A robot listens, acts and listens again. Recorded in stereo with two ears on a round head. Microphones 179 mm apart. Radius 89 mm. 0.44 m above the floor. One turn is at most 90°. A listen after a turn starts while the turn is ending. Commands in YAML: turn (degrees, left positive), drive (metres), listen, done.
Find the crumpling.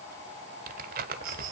turn: -45
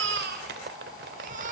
turn: -75
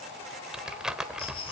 done: "Found it: crumpling, straight ahead."